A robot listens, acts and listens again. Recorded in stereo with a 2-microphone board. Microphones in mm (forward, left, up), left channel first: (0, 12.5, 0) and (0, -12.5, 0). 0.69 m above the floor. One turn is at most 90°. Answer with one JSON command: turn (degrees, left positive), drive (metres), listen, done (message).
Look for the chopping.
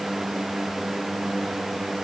{"listen": true}
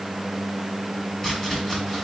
{"turn": 30}
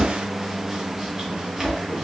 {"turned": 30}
{"turn": -20}
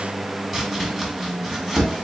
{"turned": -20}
{"done": "Facing the chopping, 1 to 2 m away."}